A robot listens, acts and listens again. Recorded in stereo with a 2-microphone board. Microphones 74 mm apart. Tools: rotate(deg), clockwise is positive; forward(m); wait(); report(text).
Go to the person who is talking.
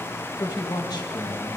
rotate(-70)
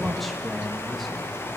forward(1.0)
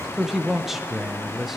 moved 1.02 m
forward(1.0)
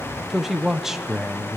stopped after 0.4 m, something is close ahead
report("Arrived at the man speaking, straight ahead.")